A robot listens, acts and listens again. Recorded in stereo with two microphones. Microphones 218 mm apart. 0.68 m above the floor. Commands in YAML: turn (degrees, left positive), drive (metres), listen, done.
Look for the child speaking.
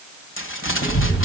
turn: 70
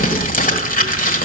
done: "Found it: a child speaking, straight ahead."